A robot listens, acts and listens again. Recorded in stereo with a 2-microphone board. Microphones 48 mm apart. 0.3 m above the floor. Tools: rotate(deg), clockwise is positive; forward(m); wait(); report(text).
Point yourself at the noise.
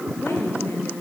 rotate(-70)
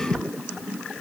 wait()
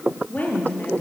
rotate(-40)
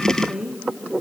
rotate(15)
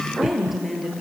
report("Facing the woman speaking.")